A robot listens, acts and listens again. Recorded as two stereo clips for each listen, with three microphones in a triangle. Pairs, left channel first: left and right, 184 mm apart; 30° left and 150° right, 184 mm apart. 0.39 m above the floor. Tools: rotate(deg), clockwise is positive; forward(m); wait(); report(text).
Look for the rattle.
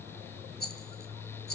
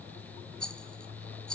rotate(-115)
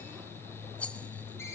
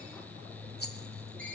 rotate(-10)
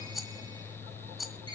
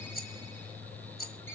report("Facing the rattle.")